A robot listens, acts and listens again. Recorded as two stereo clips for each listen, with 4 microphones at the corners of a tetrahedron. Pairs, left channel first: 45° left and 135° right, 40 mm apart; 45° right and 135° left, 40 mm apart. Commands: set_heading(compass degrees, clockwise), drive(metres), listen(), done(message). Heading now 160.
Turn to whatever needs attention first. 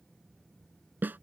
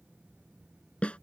listen()
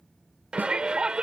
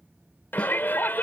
set_heading(230)
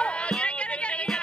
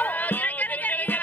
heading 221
set_heading(231)
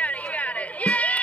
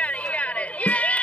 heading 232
done("Facing the shout.")